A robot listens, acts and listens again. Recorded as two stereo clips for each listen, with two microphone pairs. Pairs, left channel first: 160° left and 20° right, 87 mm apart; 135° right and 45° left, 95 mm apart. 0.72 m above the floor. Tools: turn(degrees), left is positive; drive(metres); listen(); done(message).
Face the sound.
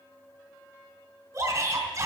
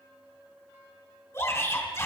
turn(degrees=-70)
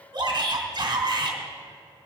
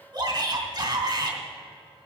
done("Facing the shout.")